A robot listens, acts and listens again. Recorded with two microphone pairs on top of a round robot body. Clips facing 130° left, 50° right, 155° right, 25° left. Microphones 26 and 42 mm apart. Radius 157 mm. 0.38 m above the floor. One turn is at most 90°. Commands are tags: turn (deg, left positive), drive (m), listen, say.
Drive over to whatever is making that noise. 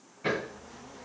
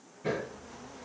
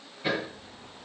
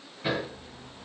<turn deg="90"/>
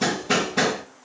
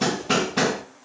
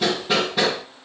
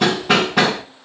<turn deg="20"/>
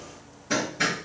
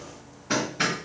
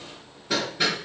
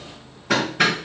<drive m="1.0"/>
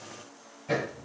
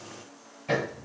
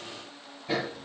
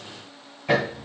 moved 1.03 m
<drive m="1.0"/>
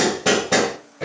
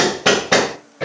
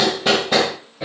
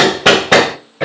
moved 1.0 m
<turn deg="10"/>
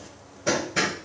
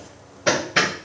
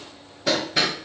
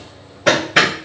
<drive m="1.0"/>
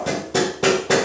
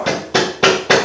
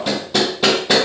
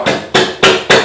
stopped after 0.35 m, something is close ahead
<say>I am next to the hammering.</say>